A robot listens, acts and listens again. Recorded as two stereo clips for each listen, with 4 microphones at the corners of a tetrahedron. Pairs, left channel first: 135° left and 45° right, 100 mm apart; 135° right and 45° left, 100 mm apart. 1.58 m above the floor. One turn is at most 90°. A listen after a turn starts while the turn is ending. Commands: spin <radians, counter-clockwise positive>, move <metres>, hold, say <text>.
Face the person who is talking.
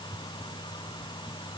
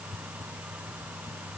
hold
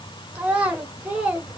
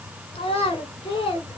spin -1.57
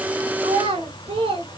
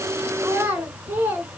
spin -0.52
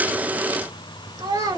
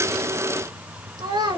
say Found it: a child speaking, straight ahead.